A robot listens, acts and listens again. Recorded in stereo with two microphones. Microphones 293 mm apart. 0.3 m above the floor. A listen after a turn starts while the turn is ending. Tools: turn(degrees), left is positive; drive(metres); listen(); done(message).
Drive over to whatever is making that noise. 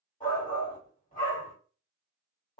turn(degrees=25)
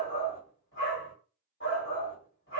turn(degrees=125)
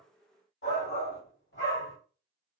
turn(degrees=60)
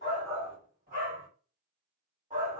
turn(degrees=-35)
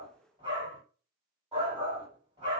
turn(degrees=-20)
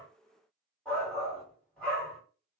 drive(metres=1.0)
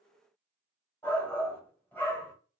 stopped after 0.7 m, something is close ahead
turn(degrees=10)
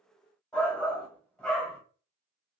done("I am next to the shout.")